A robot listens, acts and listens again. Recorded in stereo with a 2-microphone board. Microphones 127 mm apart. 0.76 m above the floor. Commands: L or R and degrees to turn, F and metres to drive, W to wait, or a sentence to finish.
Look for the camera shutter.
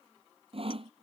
W
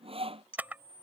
R30
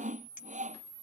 R135
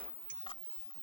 L45
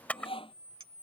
L10
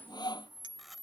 Found it: a camera shutter, straight ahead.